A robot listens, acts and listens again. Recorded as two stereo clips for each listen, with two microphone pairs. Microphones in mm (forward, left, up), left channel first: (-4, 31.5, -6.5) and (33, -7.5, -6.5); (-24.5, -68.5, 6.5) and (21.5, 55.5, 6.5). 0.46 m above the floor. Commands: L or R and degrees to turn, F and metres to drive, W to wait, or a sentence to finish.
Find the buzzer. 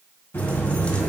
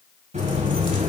L90
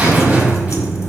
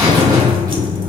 L15
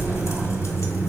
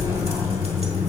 Found it: a buzzer, straight ahead.